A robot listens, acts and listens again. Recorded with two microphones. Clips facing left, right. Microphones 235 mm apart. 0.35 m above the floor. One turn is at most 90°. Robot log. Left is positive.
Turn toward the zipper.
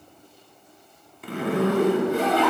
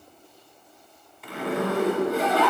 note: The zipper: about 50° left or 130° left.
cmd yaw +50
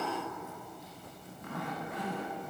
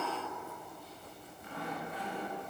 note: So it is at 80° left.
cmd yaw +80
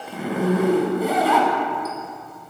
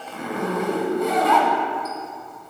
end: Facing the zipper, under 1 m away.